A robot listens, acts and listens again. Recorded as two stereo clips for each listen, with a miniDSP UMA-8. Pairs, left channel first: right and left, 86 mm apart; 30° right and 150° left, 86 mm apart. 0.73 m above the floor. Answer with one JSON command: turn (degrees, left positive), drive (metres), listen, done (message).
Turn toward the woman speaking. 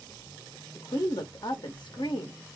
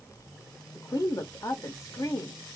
{"turn": -70}
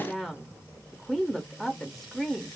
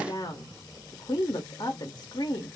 {"done": "Facing the woman speaking, under 1 m away."}